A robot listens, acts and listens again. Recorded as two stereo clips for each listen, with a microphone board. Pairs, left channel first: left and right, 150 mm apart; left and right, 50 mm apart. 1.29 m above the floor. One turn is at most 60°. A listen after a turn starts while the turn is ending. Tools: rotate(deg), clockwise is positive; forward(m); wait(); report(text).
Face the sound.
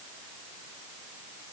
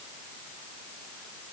wait()
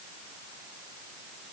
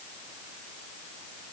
wait()
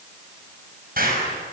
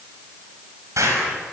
rotate(60)
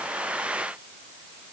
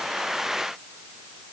rotate(30)
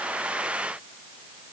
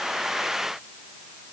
report("Facing where the explosion came from. I can't hear it now.")